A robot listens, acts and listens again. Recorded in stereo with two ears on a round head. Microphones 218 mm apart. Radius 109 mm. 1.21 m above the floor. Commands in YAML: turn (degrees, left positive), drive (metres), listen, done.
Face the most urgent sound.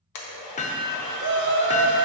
turn: -50
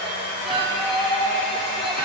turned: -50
done: "Facing the shout."